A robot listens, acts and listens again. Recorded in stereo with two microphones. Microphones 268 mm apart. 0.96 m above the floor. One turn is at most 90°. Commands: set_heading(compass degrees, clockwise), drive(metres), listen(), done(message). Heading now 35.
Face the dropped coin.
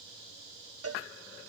listen()
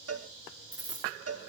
set_heading(335)
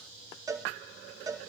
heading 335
listen()
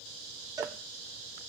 done("I heard a dropped coin, but can't make it out now. It was about straight ahead or 60° left.")